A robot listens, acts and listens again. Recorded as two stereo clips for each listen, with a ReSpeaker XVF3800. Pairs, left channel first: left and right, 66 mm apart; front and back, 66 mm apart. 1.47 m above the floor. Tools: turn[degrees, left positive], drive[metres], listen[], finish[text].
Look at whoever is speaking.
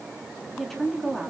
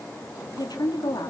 Action: finish[Facing the woman speaking.]